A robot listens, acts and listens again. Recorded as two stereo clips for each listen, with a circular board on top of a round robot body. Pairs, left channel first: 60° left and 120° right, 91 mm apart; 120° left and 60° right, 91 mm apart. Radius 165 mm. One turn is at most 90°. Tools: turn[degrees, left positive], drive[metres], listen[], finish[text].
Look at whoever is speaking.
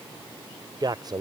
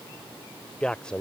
Thought: The man speaking: 160° right.
Action: turn[-90]
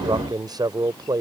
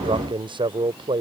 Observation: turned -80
Thought: The man speaking is now 80° right.
Action: turn[-80]
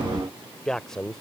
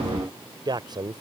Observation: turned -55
Thought: The man speaking is now 25° right.
Action: turn[-25]
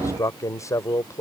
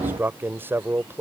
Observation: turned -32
Action: finish[Found it: a man speaking, straight ahead.]